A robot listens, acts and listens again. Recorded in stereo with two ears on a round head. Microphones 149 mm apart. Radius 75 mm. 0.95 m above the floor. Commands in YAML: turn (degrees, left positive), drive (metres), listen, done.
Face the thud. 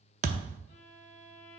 turn: -45
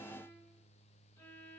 listen: true
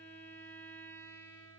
done: "I heard a thud, but can't make it out now. It was about straight ahead or 90° right."